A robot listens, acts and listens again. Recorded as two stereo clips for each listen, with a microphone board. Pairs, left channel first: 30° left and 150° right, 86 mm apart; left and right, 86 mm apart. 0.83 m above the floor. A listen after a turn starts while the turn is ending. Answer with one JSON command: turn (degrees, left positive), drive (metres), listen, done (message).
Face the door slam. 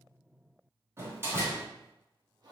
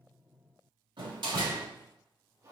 {"turn": -90}
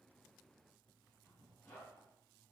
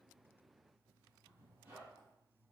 {"done": "I heard a door slam from this way, but can't make it out now."}